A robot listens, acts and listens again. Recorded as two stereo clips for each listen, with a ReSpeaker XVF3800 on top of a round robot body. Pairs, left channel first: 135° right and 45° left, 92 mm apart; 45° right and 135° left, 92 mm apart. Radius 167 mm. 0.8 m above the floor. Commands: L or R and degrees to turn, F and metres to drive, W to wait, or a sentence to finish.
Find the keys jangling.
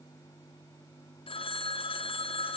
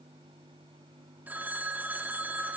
W
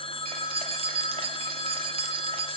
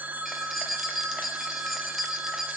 L50
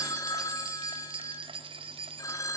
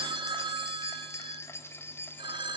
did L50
L20
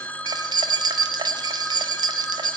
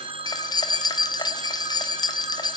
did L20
Found it: keys jangling, straight ahead, 1 to 2 m away.